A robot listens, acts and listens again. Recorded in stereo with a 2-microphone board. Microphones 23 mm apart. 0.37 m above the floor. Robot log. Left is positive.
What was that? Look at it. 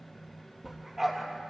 cmd yaw -30
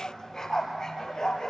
note: So it is at 35° left.
cmd yaw +35
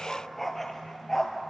note: The dog barking is now 20° left.
cmd yaw +20
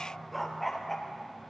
note: The dog barking is now 10° left.
cmd yaw +10
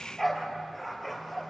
note: The dog barking is now 10° left.
cmd yaw +10
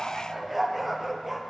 end: Facing the dog barking.